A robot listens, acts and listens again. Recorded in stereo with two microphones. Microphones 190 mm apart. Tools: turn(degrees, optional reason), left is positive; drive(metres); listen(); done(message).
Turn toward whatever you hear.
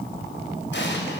turn(degrees=70, reason="The explosion: about 70° left or 110° left.")
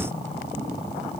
listen()
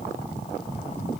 done("I heard an explosion, but can't make it out now. It was about straight ahead or 40° left.")